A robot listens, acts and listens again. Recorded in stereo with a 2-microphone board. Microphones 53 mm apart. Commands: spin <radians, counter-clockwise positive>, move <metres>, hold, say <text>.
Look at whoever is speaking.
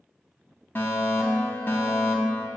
hold
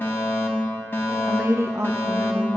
spin -1.05
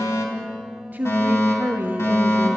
spin -0.70
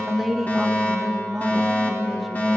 say Found it: a woman speaking, straight ahead, 1 to 2 m away.